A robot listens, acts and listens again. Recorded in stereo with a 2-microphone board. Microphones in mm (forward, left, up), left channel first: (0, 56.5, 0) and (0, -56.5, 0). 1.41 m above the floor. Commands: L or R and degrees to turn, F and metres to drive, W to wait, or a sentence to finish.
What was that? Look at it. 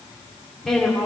L30
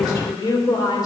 L145
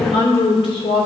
L50
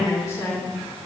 L25
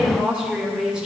R10
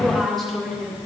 Facing the woman speaking.